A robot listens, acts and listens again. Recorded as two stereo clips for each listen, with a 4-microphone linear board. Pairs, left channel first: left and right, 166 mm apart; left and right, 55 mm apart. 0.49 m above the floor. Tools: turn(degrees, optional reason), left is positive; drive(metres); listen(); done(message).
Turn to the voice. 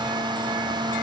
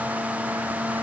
listen()
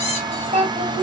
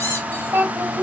turn(degrees=-50, reason="The child speaking: about 50° right or 130° right.")
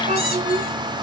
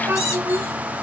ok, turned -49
turn(degrees=-55, reason="So it is at 55° right.")
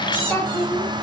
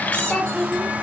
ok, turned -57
turn(degrees=20, reason="The child speaking is now 20° left.")
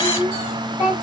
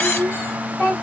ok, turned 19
turn(degrees=25, reason="The child speaking is now 25° left.")
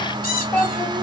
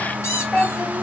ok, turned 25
turn(degrees=10, reason="The child speaking is now 10° left.")
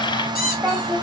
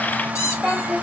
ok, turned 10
done("Facing the child speaking, 1 to 2 m away.")